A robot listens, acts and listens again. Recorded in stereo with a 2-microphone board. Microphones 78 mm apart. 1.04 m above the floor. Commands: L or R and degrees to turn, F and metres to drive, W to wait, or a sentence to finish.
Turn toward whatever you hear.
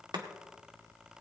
R90
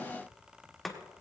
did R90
Facing the chopping, 1 to 2 m away.